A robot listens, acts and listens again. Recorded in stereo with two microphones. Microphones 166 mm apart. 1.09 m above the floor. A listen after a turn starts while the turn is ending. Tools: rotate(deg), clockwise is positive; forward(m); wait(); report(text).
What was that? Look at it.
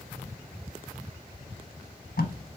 rotate(-90)
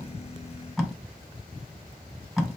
report("Found it: tape being pulled, straight ahead, under 1 m away.")